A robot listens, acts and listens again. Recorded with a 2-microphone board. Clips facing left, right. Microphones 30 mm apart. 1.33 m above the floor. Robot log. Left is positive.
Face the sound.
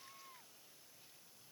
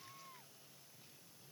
cmd idle
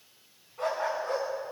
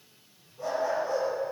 cmd yaw +90
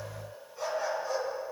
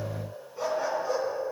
note: So it is at 10° right.
cmd yaw -10
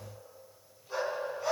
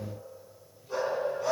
end: Found it: a dog barking, straight ahead.